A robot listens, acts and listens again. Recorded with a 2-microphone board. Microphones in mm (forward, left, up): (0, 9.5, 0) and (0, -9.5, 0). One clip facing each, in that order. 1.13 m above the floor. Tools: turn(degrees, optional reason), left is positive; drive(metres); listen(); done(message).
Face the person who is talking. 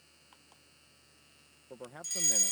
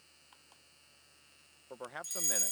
turn(degrees=-45, reason="The man speaking: about 45° right or 135° right.")
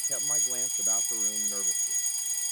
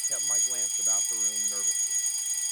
listen()
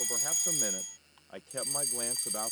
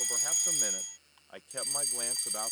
turn(degrees=-10, reason="So it is at 10° right.")
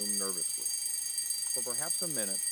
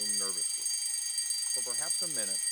listen()
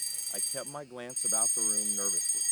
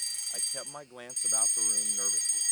done("Facing the man speaking.")